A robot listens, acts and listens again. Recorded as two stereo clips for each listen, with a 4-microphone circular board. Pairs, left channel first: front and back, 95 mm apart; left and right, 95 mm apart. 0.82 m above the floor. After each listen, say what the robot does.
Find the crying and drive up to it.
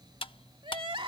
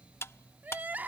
Turn 160° right.
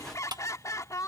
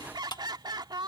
Turn 55° right.
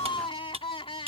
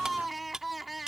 Drive 1.0 m forward.
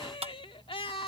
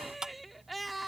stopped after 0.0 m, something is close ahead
Blocked. The crying is further on, straight ahead.